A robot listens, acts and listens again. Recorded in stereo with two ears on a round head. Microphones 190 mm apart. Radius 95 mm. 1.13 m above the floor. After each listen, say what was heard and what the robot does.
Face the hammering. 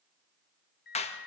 Keep listening.
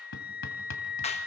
The hammering: about 60° left or 120° left. Turn 60° left.
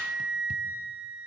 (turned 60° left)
Keep listening.
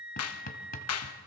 So it is at 45° left. Turn 45° left.
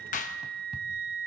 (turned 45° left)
Keep listening.
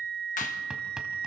Facing the hammering, 2 to 4 m away.